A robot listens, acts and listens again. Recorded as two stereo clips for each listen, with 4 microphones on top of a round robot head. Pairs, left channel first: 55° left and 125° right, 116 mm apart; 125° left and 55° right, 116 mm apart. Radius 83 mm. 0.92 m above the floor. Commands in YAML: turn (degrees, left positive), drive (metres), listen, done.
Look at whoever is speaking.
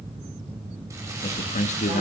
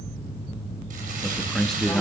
turn: 35
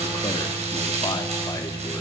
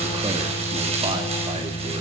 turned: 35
listen: true
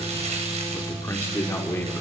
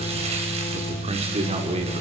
turn: -15
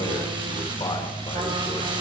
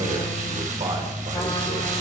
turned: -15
listen: true
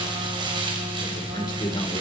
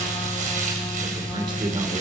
done: "Found it: a man speaking, straight ahead, over 4 m away."